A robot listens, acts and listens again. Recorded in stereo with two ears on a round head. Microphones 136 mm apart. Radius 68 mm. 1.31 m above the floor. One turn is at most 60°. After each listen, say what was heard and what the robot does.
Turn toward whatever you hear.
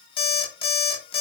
The alarm clock: about 35° left or 145° left. Turn 35° left.
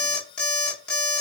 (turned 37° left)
Facing the alarm clock.